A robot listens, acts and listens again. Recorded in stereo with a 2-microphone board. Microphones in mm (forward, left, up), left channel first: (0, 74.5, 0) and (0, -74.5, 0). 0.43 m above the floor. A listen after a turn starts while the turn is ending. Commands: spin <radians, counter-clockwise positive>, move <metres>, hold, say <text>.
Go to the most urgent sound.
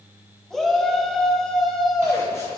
spin 0.52
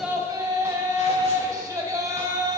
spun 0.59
spin -0.52
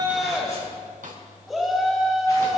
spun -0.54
move 1.0
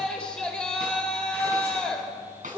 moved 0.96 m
spin 0.17
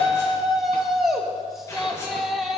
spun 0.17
move 1.0
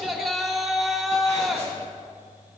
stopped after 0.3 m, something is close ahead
say I am next to the shout.